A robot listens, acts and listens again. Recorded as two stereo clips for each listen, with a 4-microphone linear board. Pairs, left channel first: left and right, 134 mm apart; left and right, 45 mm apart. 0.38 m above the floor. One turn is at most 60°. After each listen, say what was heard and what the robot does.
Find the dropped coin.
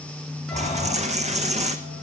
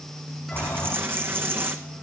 The dropped coin: about 55° right or 125° right. Turn 55° right.
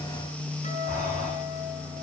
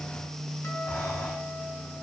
Keep listening.
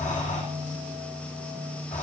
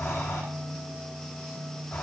I heard a dropped coin, but can't make it out now. It was about straight ahead or 70° right.